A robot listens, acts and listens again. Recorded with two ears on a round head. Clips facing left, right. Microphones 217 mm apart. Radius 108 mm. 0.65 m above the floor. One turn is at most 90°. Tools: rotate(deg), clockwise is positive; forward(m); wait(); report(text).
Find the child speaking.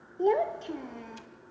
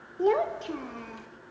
rotate(30)
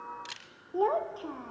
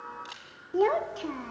rotate(90)
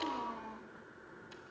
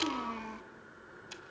rotate(40)
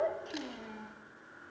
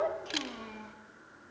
report("Found it: a child speaking, straight ahead, under 1 m away.")